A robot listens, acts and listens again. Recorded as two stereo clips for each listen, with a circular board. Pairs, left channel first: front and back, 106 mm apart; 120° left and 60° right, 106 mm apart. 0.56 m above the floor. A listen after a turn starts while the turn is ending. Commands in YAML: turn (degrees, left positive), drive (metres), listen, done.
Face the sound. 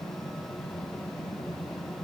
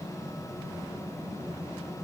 listen: true
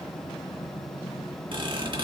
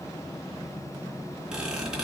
turn: -140
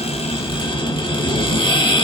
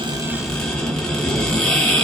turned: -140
turn: 35
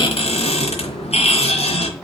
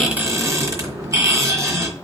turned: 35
done: "Found it: a squeak, straight ahead, 2 to 4 m away."